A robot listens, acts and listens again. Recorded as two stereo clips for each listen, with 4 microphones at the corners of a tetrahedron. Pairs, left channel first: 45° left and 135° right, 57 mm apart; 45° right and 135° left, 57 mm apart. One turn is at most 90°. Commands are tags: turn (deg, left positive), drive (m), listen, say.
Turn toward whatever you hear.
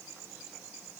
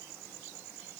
<listen/>
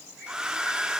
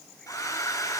<turn deg="-55"/>
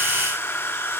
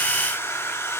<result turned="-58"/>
<say>Found it: a hair dryer, straight ahead, 1 to 2 m away.</say>